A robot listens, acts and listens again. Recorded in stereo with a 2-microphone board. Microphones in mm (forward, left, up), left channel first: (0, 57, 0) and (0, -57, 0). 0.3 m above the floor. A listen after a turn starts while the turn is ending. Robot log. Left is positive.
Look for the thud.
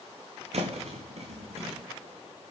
note: The thud: about 65° right or 115° right.
cmd yaw -65
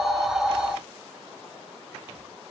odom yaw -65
cmd idle
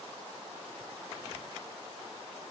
end: I heard a thud, but can't make it out now. It was about straight ahead or 50° right.